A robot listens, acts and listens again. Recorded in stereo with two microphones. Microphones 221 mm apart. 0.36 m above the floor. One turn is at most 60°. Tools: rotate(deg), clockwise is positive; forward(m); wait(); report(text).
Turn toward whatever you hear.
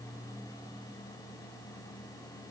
wait()
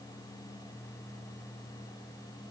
wait()
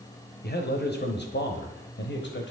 rotate(-55)
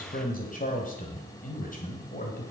rotate(-40)
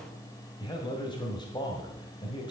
rotate(-20)
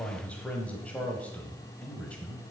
report("Facing the man speaking, 1 to 2 m away.")